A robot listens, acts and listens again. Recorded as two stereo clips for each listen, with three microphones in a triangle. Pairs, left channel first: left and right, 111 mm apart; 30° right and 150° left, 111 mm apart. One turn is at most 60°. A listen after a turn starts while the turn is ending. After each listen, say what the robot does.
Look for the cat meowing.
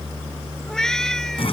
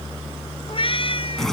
Facing the cat meowing.